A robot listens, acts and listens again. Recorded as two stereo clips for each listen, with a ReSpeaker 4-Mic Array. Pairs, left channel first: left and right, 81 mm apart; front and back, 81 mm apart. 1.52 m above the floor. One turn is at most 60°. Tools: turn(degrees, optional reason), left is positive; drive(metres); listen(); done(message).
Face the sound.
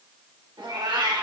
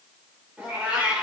turn(degrees=-60, reason="The cat meowing: 100° right.")
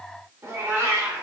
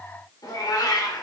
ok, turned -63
turn(degrees=-30, reason="The cat meowing is now 30° right.")
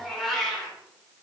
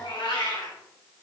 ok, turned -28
done("Facing the cat meowing, 2 to 4 m away.")